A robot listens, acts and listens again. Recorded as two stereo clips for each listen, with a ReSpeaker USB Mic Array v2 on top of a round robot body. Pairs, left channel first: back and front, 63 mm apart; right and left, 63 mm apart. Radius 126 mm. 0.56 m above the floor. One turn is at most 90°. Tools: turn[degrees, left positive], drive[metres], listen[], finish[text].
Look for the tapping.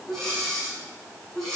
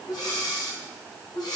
Action: listen[]
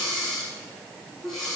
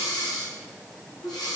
Action: listen[]
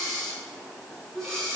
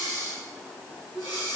Action: finish[I can't make out tapping, only breathing.]